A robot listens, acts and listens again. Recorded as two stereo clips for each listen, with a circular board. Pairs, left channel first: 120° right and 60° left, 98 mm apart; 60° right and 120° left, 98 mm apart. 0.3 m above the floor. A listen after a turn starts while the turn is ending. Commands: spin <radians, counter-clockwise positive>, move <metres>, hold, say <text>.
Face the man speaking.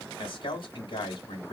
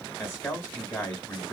spin -2.18
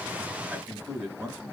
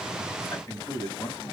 say Found it: a man speaking, straight ahead, 1 to 2 m away.